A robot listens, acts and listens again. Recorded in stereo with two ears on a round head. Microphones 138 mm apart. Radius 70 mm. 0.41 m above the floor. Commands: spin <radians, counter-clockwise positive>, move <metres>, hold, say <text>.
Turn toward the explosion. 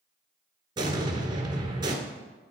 spin -0.52
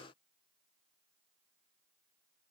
hold
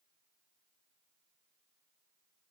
say I heard an explosion, but can't make it out now. It was about straight ahead or 120° right.